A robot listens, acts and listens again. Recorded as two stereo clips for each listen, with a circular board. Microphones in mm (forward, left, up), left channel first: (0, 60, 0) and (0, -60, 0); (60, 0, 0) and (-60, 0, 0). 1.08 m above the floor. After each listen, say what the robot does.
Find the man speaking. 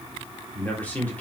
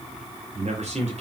Turn 165° left.
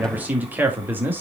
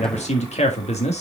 Turn 15° right.
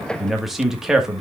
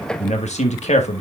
Facing the man speaking, 1 to 2 m away.